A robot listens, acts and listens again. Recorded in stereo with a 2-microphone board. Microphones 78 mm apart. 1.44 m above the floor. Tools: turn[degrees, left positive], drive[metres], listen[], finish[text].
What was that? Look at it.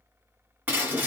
Thought: The breaking glass: about 20° right or 160° right.
Action: turn[-20]
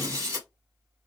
Thought: So it is at 135° right.
Action: turn[-135]
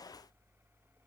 Action: finish[I heard breaking glass from this way, but can't make it out now.]